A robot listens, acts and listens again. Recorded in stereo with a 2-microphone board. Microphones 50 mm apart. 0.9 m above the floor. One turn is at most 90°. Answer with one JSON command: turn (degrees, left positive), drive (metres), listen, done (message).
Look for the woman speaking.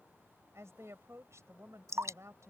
{"turn": -75}
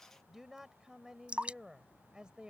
{"turn": -15}
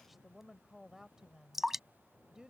{"turn": -10}
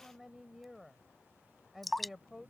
{"done": "Found it: a woman speaking, straight ahead."}